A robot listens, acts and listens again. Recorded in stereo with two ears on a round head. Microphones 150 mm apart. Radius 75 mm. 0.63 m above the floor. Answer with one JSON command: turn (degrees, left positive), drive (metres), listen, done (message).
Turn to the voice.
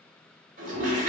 {"listen": true}
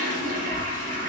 {"turn": 55}
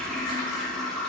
{"turn": 65}
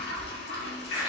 {"done": "Facing the child speaking, 1 to 2 m away."}